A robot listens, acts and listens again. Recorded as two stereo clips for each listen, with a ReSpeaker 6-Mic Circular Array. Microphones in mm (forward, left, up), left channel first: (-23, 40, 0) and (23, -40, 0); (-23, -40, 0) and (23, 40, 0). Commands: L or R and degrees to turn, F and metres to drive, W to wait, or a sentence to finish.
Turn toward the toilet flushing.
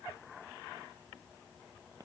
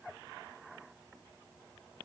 W
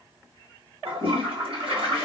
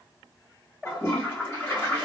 R55
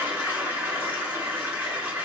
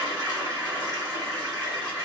Found it: a toilet flushing, straight ahead, 2 to 4 m away.